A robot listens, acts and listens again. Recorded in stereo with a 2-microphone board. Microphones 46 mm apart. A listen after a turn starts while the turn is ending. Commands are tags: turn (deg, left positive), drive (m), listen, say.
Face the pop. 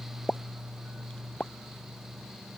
<turn deg="20"/>
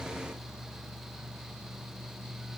<listen/>
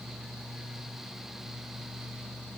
<say>I heard a pop, but can't make it out now. It was about straight ahead or 140° left.</say>